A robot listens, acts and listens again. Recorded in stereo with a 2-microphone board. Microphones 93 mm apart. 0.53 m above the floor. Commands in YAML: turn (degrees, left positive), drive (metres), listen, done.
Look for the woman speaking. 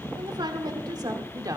turn: -40
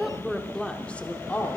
turn: 20
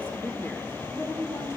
turn: 30
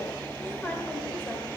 listen: true
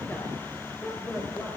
turn: 20
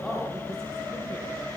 listen: true
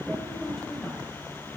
listen: true
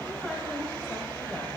done: "I heard a woman speaking from this way, but can't make it out now."